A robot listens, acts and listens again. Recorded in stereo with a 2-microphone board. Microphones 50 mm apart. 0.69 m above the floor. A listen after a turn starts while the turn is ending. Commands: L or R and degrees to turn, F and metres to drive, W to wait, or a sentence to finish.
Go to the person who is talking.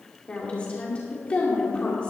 L20
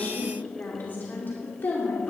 L140
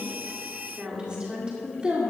R20
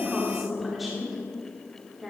F1.0
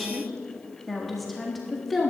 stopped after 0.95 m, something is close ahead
I am next to the woman speaking.